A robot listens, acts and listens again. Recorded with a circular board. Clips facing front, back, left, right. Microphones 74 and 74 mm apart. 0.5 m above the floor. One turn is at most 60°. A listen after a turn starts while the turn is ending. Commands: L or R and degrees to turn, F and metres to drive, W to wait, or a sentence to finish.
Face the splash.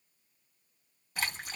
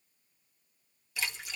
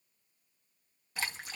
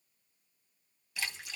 L40
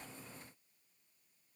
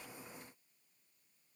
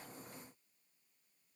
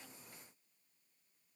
I heard a splash from this way, but can't make it out now.